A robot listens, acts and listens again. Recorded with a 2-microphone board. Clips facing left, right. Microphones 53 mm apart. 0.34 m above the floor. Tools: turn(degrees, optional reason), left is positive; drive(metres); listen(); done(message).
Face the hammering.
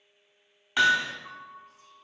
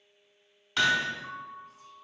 turn(degrees=20, reason="The hammering: about 20° left or 160° left.")
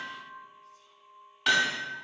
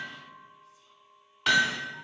done("Found it: hammering, straight ahead, under 1 m away.")